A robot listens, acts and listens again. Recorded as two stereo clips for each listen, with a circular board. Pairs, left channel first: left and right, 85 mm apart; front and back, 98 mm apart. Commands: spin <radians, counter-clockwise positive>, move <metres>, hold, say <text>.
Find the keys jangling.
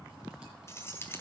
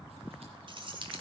spin 2.62
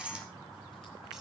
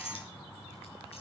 spin -0.17
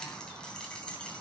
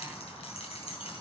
spin 0.17
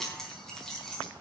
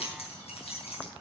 say Found it: keys jangling, straight ahead, 2 to 4 m away.